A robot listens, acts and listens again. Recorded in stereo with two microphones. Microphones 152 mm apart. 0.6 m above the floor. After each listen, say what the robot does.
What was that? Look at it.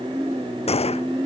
Turn 45° left.
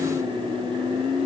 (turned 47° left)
Keep listening.
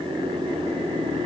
I heard a gunshot, but can't make it out now. It was about 5° right or 90° left.